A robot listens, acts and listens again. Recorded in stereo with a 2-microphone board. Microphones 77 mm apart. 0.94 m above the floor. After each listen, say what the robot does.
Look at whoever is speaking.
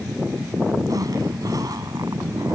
Keep listening.
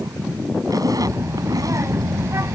Turn 40° right.
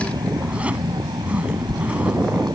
Turn 100° right.
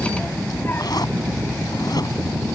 Turn 30° left.
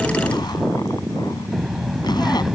Facing the child speaking.